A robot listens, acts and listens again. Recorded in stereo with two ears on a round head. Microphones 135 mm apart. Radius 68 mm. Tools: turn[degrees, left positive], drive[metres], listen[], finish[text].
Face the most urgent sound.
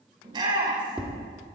Thought: The shout: about 30° right or 150° right.
Action: turn[-30]
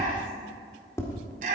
Thought: So it is at 120° right.
Action: turn[-120]
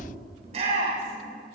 Thought: The shout is now 45° right.
Action: turn[-45]
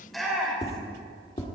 Action: finish[Found it: a shout, straight ahead.]